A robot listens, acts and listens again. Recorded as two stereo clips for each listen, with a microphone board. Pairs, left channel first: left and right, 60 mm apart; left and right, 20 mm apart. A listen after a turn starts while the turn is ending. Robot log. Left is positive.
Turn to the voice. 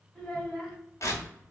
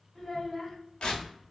cmd yaw +30
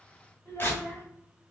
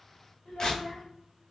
note: So it is at 145° left.
cmd yaw +145
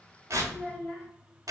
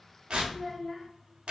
note: The child speaking is now 10° left.
cmd yaw +10
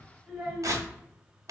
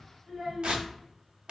end: Found it: a child speaking, straight ahead, 1 to 2 m away.